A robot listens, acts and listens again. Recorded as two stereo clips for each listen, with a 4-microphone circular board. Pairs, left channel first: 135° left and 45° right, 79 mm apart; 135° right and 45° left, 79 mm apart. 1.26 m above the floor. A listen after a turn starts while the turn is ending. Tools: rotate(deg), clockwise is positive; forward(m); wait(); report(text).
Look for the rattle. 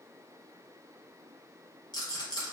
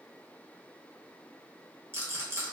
rotate(-105)
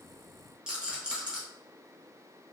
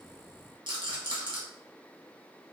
rotate(-35)
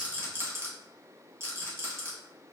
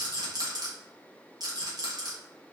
rotate(-10)
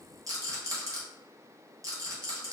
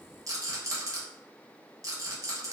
report("Found it: a rattle, straight ahead, 1 to 2 m away.")